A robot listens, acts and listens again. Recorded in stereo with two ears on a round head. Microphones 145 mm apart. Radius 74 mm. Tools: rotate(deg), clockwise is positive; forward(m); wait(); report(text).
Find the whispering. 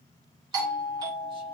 wait()
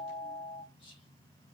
wait()
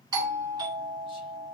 report("I can't make out whispering to turn to.")